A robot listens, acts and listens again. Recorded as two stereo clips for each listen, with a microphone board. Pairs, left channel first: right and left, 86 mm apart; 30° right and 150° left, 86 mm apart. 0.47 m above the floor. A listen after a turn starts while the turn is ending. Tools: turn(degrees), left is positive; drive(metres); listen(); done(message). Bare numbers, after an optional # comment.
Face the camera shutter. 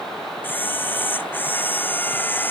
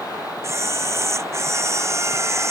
# The camera shutter: 155° right.
turn(-155)
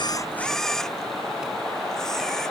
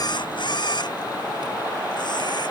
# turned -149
done("Facing the camera shutter.")